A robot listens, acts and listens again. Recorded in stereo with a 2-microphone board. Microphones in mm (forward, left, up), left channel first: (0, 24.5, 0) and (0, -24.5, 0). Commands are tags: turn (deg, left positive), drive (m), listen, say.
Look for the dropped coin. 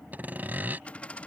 <turn deg="25"/>
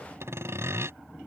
<listen/>
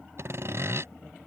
<say>I heard a dropped coin, but can't make it out now. It was about straight ahead or 130° left.</say>